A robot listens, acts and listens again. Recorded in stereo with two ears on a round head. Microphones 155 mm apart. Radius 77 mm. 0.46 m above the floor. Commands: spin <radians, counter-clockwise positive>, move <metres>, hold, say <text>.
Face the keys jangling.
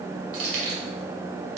spin -1.13
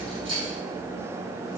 spin -0.61
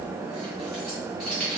say Facing the keys jangling.